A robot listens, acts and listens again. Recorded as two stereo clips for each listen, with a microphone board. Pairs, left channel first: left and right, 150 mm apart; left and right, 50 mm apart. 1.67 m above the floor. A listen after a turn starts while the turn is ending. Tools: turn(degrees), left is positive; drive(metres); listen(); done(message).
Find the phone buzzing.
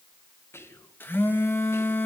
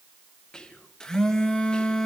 turn(degrees=30)
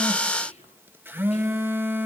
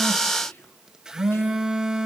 turn(degrees=-15)
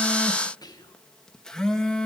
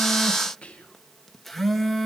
done("Facing the phone buzzing, 1 to 2 m away.")